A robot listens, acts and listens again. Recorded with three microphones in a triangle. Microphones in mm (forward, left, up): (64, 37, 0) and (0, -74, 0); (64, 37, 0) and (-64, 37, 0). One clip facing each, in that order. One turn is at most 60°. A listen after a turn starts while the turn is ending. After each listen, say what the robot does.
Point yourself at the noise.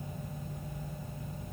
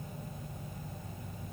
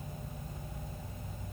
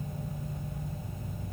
Keep listening.
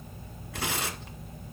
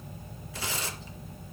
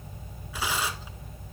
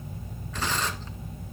Turn 60° left.
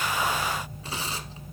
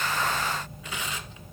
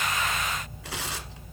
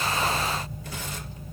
Found it: tearing paper, straight ahead.